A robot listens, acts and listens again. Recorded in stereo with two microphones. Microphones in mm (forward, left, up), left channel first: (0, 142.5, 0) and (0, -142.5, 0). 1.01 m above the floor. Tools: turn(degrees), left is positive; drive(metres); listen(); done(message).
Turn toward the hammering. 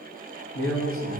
listen()
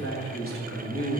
listen()
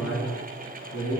done("I can't make out hammering to turn to.")